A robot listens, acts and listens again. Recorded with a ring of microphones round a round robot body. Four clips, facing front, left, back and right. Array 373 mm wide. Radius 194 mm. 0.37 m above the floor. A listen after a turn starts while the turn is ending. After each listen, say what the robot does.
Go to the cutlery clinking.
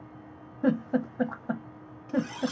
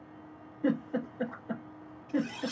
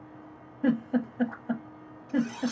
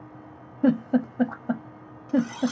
Turn 45° right.
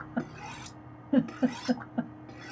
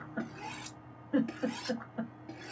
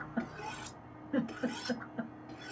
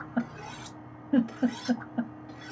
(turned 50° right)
Drive 1.0 m forward.
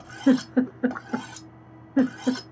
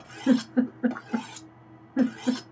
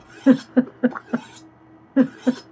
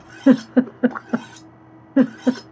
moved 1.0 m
Turn 15° left.
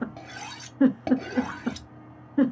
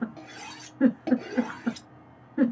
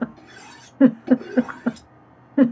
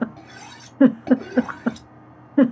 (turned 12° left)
Drive 1.0 m forward.
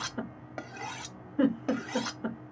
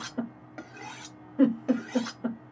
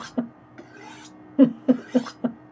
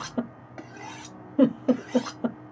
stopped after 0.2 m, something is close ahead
I am next to the cutlery clinking.